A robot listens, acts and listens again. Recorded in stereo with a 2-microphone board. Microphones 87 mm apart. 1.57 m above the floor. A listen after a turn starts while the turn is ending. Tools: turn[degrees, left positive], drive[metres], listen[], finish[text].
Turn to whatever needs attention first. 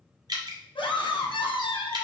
Action: turn[90]
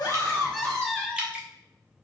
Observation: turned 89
Thought: So it is at 10° left.
Action: turn[10]
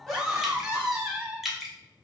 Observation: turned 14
Action: finish[Facing the scream, 1 to 2 m away.]